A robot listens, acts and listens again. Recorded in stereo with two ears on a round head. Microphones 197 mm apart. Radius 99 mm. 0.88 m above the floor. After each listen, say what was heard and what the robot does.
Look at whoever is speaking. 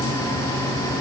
Keep listening.
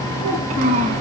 The child speaking: about 30° right or 150° right. Turn 30° right.
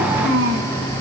So it is at 120° right. Turn 120° right.
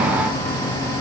Keep listening.
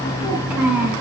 Facing the child speaking, over 4 m away.